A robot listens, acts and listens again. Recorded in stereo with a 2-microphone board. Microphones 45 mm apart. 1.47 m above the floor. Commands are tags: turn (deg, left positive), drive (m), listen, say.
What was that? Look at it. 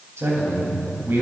<turn deg="-90"/>
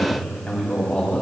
<turn deg="25"/>
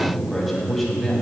<turn deg="10"/>
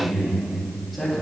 <say>Facing the man speaking, 2 to 4 m away.</say>